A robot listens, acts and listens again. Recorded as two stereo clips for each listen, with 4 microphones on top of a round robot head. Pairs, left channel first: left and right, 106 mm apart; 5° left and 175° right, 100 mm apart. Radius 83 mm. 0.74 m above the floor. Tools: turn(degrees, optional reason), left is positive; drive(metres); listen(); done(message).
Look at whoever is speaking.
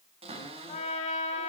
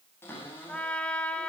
listen()
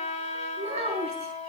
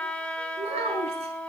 turn(degrees=-130, reason="The child speaking: 130° right.")
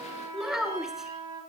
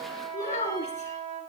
done("Found it: a child speaking, straight ahead, over 4 m away.")